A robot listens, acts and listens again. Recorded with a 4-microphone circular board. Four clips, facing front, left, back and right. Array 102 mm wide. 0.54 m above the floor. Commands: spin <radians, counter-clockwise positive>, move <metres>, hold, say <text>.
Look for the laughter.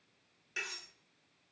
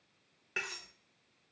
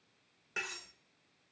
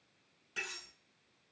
hold
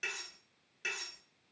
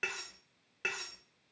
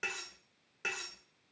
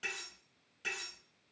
hold
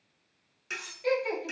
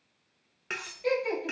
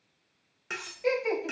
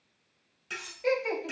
spin -2.71
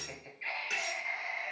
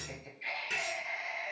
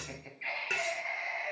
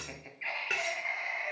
spin -1.83
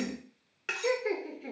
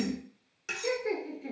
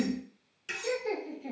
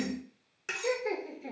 spin -0.26
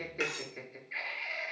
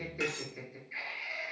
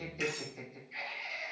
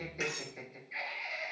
say Found it: laughter, straight ahead, 1 to 2 m away.